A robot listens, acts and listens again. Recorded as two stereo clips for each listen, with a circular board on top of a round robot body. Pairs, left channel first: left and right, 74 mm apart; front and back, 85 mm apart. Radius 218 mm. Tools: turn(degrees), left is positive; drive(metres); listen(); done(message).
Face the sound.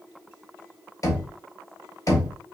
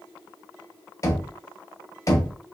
turn(degrees=50)
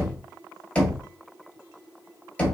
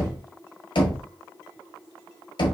turn(degrees=15)
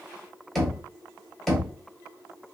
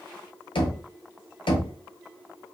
done("Found it: knocking, straight ahead.")